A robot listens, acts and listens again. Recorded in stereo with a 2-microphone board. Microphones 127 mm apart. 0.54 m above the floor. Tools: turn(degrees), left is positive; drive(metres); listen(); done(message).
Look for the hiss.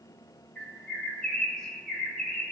listen()
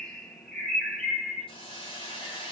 turn(degrees=40)
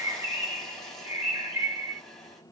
done("Found it: a hiss, straight ahead, 1 to 2 m away.")